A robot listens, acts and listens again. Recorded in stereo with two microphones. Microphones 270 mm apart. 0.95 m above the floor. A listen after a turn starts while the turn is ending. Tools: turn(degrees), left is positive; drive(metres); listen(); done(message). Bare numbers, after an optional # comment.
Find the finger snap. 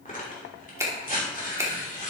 turn(-30)
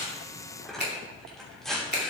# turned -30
# So it is at 140° right.
turn(-140)
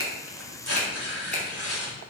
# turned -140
listen()
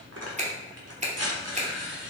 # The finger snap is now 25° right.
turn(-25)
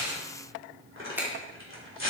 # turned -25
# The finger snap is now 10° right.
turn(-10)
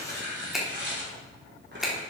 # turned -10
done("Facing the finger snap.")